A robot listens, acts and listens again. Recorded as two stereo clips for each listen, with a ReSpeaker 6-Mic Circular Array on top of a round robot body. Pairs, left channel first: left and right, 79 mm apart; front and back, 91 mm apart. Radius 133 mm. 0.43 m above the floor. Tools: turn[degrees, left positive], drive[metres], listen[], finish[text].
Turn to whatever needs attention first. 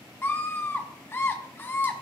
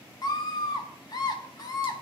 Thought: The scream: 35° left.
Action: turn[35]
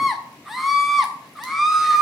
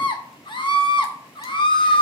Action: finish[Found it: a scream, straight ahead, 2 to 4 m away.]